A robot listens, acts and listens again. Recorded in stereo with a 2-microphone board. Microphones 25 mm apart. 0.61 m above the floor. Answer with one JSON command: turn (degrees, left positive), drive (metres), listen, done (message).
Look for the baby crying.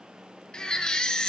{"turn": 35}
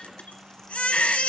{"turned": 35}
{"turn": 110}
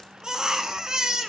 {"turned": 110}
{"turn": -30}
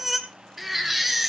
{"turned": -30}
{"done": "Facing the baby crying, 2 to 4 m away."}